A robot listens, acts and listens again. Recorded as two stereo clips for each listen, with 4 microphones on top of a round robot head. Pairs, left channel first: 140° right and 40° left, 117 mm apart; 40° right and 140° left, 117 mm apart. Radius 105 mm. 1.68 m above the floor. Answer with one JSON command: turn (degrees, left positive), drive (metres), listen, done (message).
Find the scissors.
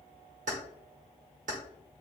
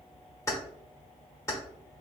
{"listen": true}
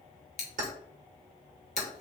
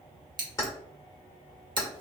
{"turn": -165}
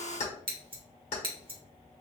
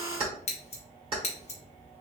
{"done": "Facing the scissors."}